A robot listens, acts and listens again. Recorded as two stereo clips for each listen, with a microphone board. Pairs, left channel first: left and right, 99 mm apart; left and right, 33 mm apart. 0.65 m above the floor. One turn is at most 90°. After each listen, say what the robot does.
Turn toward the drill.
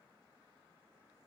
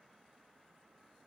Keep listening.
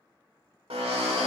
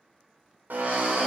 Turn 75° right.
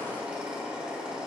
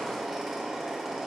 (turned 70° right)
Turn 10° right.
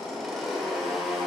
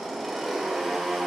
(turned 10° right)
Found it: a drill, straight ahead, 1 to 2 m away.